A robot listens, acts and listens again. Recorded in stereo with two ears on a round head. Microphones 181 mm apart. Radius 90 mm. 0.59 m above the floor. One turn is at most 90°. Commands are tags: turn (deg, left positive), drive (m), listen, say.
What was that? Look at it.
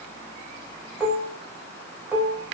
<turn deg="-30"/>
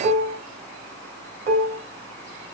<turn deg="-90"/>
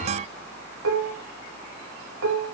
<turn deg="-85"/>
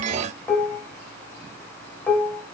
<turn deg="10"/>
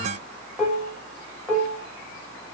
<say>Facing the dishes clattering, 2 to 4 m away.</say>